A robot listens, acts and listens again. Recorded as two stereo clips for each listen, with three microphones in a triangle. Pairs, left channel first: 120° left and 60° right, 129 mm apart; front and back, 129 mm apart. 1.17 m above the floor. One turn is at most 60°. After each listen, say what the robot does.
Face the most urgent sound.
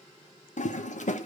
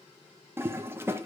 Keep listening.
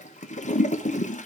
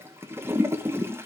Keep listening.
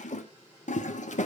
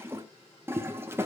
I can't make out anything urgent to turn to.